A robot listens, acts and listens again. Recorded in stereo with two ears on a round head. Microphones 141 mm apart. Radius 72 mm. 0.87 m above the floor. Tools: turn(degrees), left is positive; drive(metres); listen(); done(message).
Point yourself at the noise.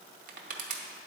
turn(degrees=-55)
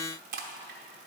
turn(degrees=-60)
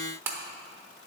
turn(degrees=-15)
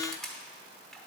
done("Facing the crushing, under 1 m away.")